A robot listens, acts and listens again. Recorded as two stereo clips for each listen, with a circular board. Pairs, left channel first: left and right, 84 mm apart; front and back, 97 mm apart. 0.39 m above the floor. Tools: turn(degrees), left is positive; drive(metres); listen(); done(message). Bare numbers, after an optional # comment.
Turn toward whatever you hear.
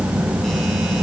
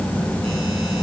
listen()
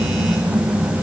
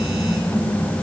listen()
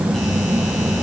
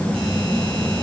done("I can't make out anything to turn to.")